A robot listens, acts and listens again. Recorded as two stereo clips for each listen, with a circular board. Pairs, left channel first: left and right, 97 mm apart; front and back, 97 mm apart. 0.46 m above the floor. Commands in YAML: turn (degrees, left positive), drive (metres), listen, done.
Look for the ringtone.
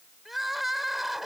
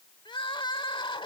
listen: true
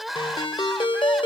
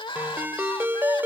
turn: 115
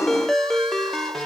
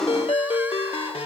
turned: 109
done: "Facing the ringtone."